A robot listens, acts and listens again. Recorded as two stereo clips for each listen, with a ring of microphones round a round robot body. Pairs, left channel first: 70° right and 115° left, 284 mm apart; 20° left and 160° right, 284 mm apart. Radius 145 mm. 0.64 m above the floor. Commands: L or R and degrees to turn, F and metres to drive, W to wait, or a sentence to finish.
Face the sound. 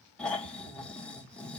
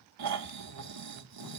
R155
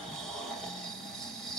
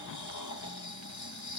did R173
L20
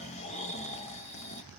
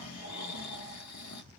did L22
Facing the snoring, 1 to 2 m away.